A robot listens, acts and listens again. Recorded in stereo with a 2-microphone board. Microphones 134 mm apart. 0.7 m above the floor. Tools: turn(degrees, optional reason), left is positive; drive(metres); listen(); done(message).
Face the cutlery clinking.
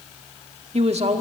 listen()
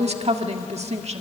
listen()
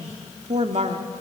done("I can't make out cutlery clinking to turn to.")